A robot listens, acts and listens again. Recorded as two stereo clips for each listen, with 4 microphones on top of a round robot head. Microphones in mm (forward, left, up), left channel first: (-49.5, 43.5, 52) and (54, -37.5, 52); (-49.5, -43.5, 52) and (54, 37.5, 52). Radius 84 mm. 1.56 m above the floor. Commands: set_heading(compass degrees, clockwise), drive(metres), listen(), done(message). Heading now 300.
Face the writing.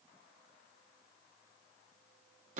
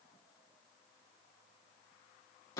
listen()
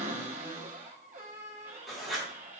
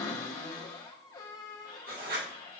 set_heading(250)
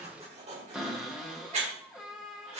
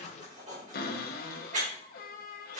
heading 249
done("Facing the writing, 2 to 4 m away.")